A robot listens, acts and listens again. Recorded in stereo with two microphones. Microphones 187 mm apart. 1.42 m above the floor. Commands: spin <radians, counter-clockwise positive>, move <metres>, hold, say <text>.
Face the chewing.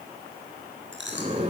spin -1.57
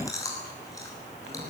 spin 0.26
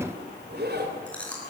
say Found it: chewing, straight ahead, over 4 m away.